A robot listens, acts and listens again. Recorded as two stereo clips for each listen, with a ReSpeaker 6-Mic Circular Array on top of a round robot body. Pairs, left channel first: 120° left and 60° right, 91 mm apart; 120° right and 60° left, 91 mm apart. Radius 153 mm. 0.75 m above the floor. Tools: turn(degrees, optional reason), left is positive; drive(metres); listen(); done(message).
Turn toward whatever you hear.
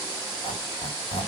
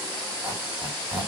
turn(degrees=125, reason="The squeak: 125° left.")
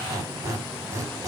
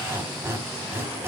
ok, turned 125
done("Facing the squeak.")